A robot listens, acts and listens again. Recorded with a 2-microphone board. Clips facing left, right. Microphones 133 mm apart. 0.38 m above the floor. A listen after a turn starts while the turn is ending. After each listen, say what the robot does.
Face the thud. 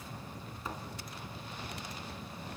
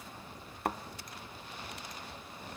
Turn 65° right.
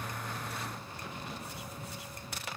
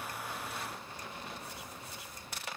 Keep listening.
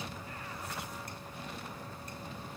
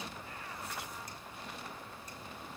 I heard a thud, but can't make it out now. It was about straight ahead or 50° right.